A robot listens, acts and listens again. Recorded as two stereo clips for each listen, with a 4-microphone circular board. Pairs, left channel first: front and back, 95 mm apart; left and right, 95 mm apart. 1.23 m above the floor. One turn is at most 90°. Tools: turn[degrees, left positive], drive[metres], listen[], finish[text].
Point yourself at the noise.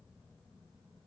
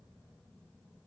Action: listen[]
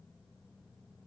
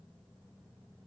Action: listen[]
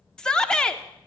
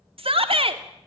Thought: The shout: 80° right.
Action: turn[-80]
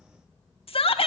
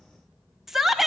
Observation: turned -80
Action: finish[Facing the shout.]